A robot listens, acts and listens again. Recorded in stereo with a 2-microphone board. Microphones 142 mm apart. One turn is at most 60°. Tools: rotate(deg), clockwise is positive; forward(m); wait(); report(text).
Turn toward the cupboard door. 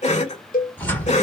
rotate(-30)
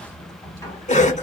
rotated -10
rotate(-20)
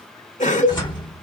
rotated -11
rotate(-60)
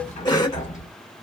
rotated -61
rotate(-60)
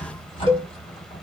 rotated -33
rotate(-50)
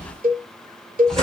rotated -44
report("Facing the cupboard door, 1 to 2 m away.")